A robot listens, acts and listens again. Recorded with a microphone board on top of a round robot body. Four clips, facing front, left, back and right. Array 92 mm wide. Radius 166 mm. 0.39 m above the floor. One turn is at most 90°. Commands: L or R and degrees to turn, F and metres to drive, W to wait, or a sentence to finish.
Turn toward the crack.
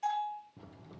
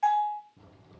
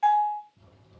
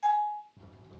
Facing the crack.